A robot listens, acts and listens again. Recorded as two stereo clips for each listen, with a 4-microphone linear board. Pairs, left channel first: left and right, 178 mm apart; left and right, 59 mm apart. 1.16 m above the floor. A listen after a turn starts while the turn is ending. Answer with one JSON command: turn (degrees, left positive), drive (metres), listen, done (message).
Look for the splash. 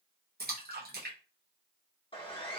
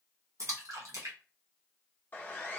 {"turn": -60}
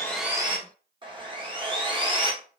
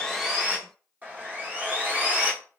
{"listen": true}
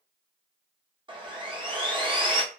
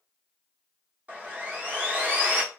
{"done": "I heard a splash, but can't make it out now. It was about straight ahead or 60° right."}